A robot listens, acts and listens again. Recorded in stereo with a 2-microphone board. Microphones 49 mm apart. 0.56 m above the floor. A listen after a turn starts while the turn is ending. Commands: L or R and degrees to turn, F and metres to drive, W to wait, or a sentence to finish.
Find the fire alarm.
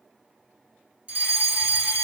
R25
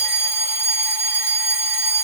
R125
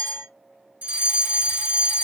R45
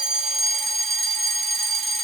Facing the fire alarm.